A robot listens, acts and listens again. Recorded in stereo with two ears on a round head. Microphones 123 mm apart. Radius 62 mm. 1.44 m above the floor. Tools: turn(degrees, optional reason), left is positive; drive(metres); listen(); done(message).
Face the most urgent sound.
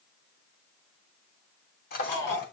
turn(degrees=25, reason="The shout: about 25° left or 155° left.")
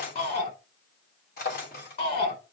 turn(degrees=130, reason="So it is at 130° left.")
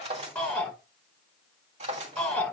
turn(degrees=10, reason="The shout is now 10° left.")
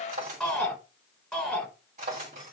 done("Found it: a shout, straight ahead.")